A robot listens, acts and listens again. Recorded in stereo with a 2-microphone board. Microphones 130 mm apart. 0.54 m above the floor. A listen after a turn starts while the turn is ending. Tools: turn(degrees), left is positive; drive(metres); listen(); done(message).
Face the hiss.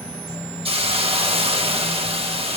turn(degrees=-50)
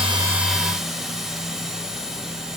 done("Found it: a hiss, straight ahead, 1 to 2 m away.")